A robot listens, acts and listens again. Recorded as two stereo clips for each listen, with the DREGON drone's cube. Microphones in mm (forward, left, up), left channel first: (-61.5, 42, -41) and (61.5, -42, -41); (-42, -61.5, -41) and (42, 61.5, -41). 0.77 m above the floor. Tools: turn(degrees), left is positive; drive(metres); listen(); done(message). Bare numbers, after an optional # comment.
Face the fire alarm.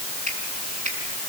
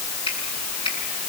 listen()
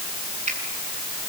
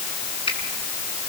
listen()
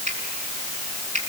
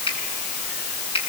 done("I can't make out a fire alarm, only a finger snap.")